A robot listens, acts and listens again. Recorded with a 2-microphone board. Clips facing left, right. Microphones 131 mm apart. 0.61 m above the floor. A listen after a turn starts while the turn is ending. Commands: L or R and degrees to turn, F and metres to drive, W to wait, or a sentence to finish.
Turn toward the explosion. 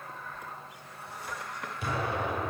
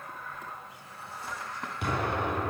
R70
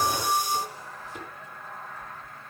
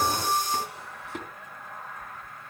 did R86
W
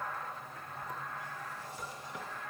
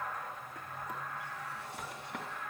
I heard an explosion, but can't make it out now. It was about 15° left or 25° right.